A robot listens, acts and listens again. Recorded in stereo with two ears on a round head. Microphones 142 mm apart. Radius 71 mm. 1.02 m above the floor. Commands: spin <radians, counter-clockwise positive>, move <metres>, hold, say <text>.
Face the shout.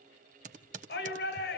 spin 1.57
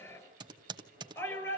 spin 0.26
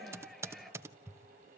say Found it: a shout, straight ahead, over 4 m away.